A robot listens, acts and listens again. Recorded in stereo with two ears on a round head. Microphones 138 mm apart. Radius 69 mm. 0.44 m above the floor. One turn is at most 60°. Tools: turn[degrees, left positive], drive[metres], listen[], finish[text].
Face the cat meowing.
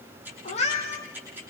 Thought: The cat meowing: about 45° left or 135° left.
Action: turn[45]
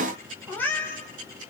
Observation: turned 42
Thought: So it is at 15° left.
Action: turn[15]
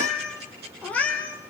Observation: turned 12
Thought: The cat meowing is now 10° left.
Action: turn[10]
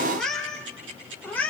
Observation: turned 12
Thought: The cat meowing is now 10° left.
Action: turn[10]
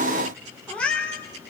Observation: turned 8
Action: finish[Facing the cat meowing.]